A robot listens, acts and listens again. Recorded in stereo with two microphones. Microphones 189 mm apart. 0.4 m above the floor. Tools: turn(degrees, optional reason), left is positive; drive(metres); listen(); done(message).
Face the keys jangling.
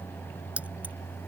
turn(degrees=-30)
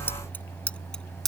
turn(degrees=30)
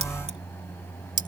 turn(degrees=-50, reason="So it is at 50° right.")
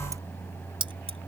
turn(degrees=-25, reason="The keys jangling is now 25° right.")
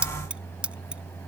done("Found it: keys jangling, straight ahead.")